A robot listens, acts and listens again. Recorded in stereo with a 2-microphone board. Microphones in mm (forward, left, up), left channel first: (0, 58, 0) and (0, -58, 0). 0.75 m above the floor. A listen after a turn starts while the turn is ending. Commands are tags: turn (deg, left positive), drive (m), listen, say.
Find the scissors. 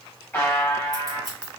<turn deg="-35"/>
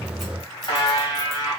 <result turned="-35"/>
<listen/>
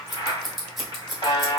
<say>Found it: scissors, straight ahead, 1 to 2 m away.</say>